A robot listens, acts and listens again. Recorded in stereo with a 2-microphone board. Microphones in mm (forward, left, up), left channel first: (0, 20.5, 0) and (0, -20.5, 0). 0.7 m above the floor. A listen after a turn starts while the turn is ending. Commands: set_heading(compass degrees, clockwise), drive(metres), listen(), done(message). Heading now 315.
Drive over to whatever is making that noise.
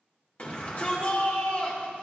set_heading(275)
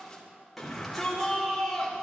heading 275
drive(1.0)
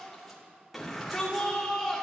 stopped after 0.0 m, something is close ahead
done("Something is in my way. I am facing the shout but have not reached it.")